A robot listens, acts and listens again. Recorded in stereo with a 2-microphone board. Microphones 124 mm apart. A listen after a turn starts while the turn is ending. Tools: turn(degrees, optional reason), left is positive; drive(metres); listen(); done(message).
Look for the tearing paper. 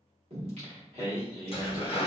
turn(degrees=45, reason="The tearing paper: about 45° left or 135° left.")
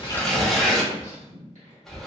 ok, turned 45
done("Found it: tearing paper, straight ahead.")